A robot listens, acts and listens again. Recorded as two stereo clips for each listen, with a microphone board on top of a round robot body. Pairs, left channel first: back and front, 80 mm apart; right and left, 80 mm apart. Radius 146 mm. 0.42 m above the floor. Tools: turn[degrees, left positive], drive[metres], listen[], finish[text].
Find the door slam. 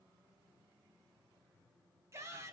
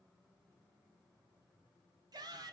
Action: listen[]
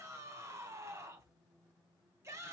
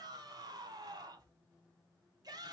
Action: listen[]
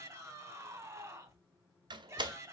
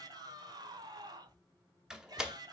Thought: The door slam: 10° left.
Action: turn[10]
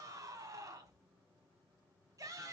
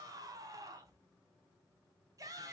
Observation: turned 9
Action: finish[I heard a door slam from this way, but can't make it out now.]